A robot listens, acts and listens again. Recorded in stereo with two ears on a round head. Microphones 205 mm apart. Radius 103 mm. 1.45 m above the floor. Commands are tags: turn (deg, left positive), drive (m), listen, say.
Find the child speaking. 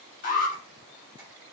<listen/>
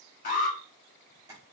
<listen/>
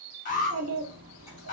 <turn deg="-70"/>
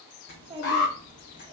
<turn deg="-25"/>
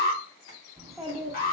<say>Found it: a child speaking, straight ahead.</say>